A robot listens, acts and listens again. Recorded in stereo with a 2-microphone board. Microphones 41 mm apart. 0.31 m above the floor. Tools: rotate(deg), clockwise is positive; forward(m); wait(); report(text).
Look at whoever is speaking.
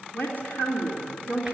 rotate(-45)
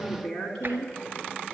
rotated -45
rotate(-10)
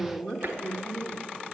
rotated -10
report("Facing the woman speaking, 2 to 4 m away.")